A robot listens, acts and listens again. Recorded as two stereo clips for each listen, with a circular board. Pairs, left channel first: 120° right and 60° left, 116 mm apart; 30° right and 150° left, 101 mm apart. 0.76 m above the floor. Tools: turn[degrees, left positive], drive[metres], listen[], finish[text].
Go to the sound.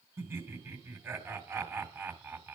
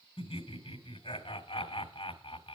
Thought: The laughter: 10° right.
Action: turn[-10]
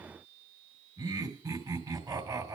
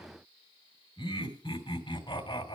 Action: drive[1.0]
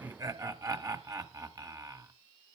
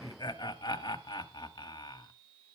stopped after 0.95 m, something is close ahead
Action: finish[Arrived at the laughter, straight ahead.]